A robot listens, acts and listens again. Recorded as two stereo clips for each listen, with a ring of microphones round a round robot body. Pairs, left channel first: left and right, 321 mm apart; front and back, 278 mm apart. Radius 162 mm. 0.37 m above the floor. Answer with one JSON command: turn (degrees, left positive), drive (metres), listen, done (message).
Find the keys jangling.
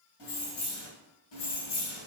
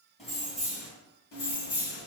{"turn": 45}
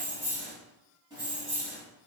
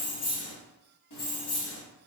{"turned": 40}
{"turn": -20}
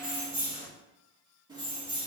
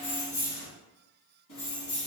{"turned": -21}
{"turn": -15}
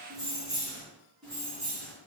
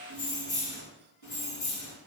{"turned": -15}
{"done": "Facing the keys jangling."}